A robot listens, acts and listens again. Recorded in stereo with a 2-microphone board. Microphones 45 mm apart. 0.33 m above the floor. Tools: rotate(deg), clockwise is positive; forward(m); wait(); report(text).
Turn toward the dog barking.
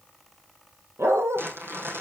rotate(90)
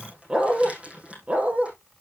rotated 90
rotate(35)
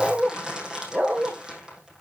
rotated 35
rotate(40)
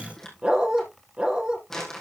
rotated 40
rotate(25)
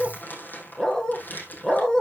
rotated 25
rotate(-10)
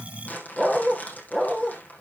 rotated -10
report("Facing the dog barking, 2 to 4 m away.")